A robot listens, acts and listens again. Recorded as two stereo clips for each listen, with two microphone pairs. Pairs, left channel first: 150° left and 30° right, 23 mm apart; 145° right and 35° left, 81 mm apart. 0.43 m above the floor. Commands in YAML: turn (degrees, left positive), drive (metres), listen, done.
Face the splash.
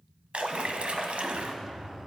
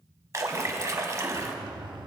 turn: -10
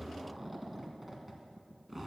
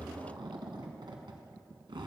done: "I heard a splash from this way, but can't make it out now."